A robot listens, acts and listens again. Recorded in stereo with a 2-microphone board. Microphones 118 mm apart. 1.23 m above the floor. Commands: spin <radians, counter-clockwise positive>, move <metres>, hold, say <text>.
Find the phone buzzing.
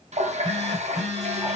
spin 0.52
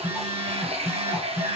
spin -0.35
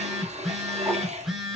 say Found it: a phone buzzing, straight ahead.